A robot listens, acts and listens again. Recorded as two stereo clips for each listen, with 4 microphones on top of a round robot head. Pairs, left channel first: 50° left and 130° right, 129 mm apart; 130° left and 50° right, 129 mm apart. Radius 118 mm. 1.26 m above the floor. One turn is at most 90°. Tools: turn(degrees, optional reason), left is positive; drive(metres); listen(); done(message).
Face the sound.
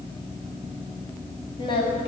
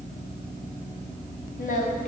turn(degrees=90, reason="The singing: 105° left.")
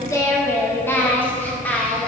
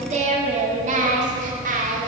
turn(degrees=-30, reason="The singing is now 30° right.")
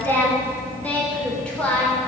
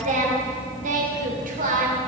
turn(degrees=-35, reason="The singing is now 35° right.")
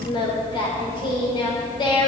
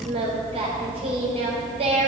done("Found it: singing, straight ahead.")